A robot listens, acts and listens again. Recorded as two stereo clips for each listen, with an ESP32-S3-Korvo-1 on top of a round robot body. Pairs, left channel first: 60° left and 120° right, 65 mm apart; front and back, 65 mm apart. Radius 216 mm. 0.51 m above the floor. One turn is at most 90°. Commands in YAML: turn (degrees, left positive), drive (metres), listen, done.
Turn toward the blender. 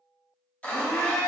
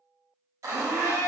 turn: 90
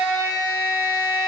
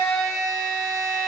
turn: 45
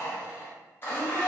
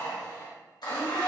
done: "Found it: a blender, straight ahead, 1 to 2 m away."